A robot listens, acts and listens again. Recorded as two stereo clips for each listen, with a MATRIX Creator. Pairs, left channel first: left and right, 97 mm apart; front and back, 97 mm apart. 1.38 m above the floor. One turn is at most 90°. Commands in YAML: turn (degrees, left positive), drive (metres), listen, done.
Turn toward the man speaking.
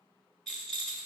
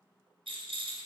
listen: true
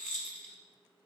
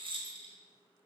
listen: true
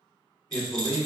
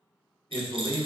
turn: 45
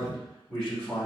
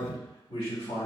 done: "Facing the man speaking."